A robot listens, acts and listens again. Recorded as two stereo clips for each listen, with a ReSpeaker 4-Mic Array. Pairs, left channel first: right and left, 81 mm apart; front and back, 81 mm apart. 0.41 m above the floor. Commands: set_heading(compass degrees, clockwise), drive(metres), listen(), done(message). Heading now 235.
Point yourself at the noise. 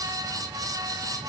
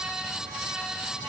listen()
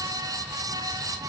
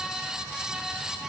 listen()
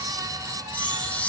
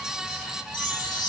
set_heading(255)
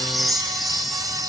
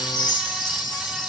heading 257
done("Facing the chime, 1 to 2 m away.")